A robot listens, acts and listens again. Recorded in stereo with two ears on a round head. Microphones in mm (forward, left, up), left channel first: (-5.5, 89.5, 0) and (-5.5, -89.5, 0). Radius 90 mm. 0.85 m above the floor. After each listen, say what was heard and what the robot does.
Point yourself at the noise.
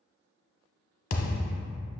The thud: about 40° left or 140° left. Turn 40° left.
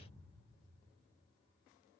Keep listening.
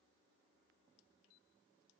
I heard a thud, but can't make it out now. It was about straight ahead or 100° left.